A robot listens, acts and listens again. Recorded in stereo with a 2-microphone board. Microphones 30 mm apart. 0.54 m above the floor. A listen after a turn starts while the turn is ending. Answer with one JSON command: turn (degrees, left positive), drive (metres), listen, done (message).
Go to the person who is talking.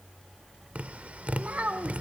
{"turn": -50}
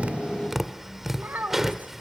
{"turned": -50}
{"turn": -80}
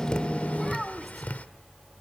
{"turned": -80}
{"drive": 1.0}
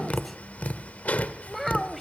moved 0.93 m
{"drive": 1.0}
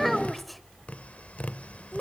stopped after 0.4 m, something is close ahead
{"done": "I am next to the child speaking."}